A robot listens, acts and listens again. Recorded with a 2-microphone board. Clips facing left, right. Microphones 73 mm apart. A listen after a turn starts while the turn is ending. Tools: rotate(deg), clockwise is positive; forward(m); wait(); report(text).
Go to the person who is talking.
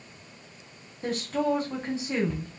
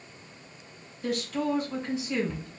rotate(-35)
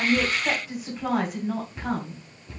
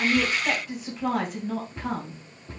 forward(1.0)
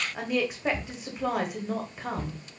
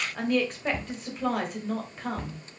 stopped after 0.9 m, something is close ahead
rotate(-10)
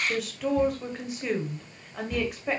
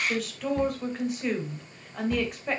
report("I am next to the woman speaking.")